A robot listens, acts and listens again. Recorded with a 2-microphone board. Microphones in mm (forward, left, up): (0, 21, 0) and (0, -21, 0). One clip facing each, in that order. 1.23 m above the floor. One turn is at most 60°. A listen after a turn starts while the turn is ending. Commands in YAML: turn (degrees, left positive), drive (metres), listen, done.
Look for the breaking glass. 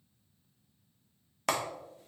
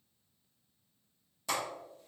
listen: true
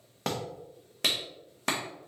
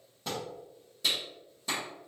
listen: true
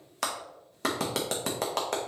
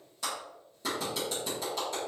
done: "I can't make out breaking glass, only a clap."